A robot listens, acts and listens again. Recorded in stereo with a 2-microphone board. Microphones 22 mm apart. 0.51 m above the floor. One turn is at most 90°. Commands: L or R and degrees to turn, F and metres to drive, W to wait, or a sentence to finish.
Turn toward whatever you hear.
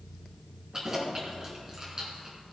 R30
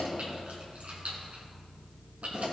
R90
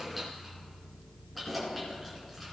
Facing the keys jangling.